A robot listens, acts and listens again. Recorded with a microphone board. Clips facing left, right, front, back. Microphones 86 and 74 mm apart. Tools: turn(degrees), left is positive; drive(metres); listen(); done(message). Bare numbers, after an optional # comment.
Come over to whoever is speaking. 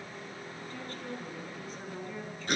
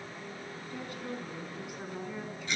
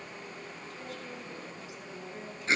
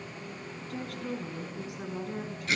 # The woman speaking: 170° right.
turn(-170)
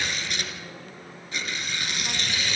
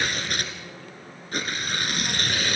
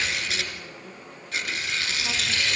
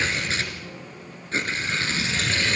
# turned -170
listen()
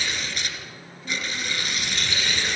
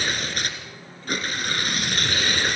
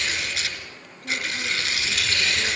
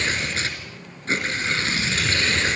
listen()
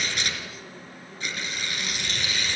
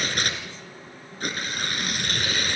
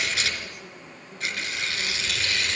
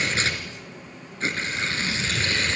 done("I heard a woman speaking from this way, but can't make it out now. I did not reach it.")